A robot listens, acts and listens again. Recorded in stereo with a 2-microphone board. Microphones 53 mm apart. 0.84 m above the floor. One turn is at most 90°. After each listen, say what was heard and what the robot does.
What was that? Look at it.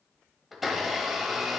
Turn 30° left.
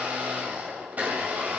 So it is at 35° right. Turn 35° right.
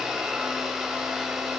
The blender is now 10° right. Turn 10° right.
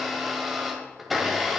Found it: a blender, straight ahead, 1 to 2 m away.